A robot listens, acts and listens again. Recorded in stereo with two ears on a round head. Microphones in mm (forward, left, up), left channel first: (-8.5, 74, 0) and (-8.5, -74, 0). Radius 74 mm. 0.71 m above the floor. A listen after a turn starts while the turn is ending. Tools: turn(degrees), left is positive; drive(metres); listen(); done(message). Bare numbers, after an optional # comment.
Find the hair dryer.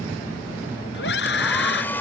turn(30)
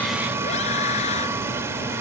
# So it is at 15° right.
turn(-15)
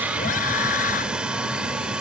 done("Found it: a hair dryer, straight ahead.")